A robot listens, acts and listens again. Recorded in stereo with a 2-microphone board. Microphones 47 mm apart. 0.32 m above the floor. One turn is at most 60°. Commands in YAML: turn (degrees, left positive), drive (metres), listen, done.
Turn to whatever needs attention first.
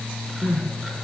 turn: 40
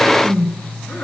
turn: 60
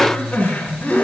turn: 35
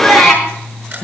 done: "Facing the crying, over 4 m away."